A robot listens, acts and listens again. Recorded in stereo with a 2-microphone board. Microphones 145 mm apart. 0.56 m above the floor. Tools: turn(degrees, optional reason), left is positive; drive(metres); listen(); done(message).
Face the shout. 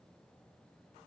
listen()
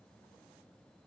listen()
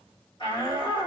turn(degrees=35, reason="The shout: about 35° left or 145° left.")
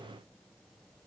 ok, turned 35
listen()
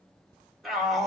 done("Facing the shout.")